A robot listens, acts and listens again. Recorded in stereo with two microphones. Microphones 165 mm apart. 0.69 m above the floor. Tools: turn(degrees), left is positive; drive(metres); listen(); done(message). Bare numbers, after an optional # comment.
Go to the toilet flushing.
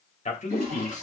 # The toilet flushing: about 50° right or 130° right.
turn(-50)
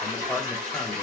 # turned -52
# So it is at 80° right.
turn(-80)
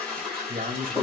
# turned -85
drive(1.0)
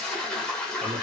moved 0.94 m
drive(1.0)
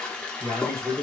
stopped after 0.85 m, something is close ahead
done("Arrived at the toilet flushing, straight ahead.")